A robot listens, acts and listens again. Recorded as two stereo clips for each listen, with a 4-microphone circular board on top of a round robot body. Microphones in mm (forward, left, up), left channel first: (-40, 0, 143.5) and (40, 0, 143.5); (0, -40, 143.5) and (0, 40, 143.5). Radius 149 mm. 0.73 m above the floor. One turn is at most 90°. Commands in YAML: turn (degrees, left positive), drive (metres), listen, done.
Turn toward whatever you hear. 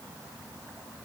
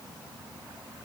listen: true
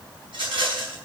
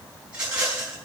turn: 10
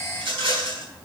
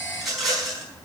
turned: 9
done: "Facing the rattle, over 4 m away."